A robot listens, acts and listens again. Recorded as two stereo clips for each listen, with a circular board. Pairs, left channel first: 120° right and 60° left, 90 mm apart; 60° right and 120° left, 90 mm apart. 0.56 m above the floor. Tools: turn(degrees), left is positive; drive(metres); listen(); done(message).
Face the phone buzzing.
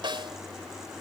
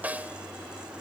listen()
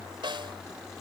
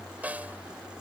listen()
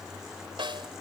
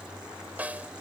done("I can't make out a phone buzzing to turn to.")